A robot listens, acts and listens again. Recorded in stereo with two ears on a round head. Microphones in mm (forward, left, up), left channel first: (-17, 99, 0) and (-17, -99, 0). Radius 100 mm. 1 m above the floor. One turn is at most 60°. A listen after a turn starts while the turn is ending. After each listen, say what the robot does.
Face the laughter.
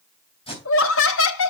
Turn 60° left.
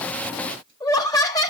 Turn 20° left.
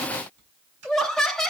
Found it: laughter, straight ahead, 1 to 2 m away.